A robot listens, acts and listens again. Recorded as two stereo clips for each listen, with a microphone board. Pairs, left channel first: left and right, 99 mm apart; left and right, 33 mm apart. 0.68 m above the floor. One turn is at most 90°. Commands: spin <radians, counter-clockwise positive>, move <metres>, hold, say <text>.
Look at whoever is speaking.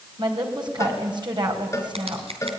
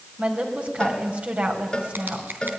spin -0.87
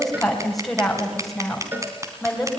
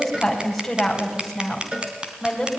say Found it: a woman speaking, straight ahead, 2 to 4 m away.